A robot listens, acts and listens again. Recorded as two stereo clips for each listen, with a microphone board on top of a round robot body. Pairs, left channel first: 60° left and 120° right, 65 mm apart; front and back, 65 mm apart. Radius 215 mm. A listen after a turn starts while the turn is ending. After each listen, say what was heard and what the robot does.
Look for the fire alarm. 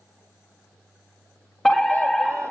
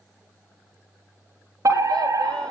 The fire alarm: 145° left. Turn 145° left.
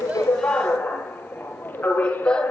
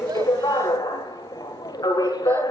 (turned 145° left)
Found it: a fire alarm, straight ahead, 2 to 4 m away.